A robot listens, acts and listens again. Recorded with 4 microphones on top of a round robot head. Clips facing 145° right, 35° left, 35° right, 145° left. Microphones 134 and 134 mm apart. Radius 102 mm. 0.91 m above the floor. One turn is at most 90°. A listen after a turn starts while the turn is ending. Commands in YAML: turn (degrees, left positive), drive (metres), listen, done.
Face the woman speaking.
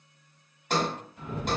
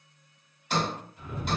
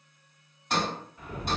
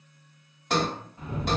listen: true
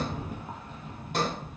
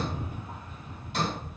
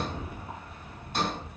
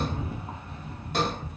listen: true
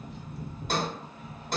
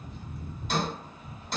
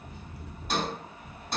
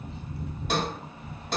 done: "I can't make out a woman speaking, only a sliding door and a rattle."